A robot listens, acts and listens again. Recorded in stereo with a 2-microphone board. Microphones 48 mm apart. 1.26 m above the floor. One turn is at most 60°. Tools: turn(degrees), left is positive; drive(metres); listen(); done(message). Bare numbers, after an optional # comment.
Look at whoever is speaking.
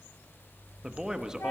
turn(-30)
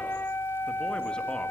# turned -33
listen()
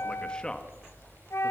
# So it is at 20° left.
turn(20)
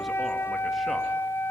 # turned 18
listen()
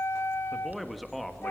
done("Facing the man speaking, 1 to 2 m away.")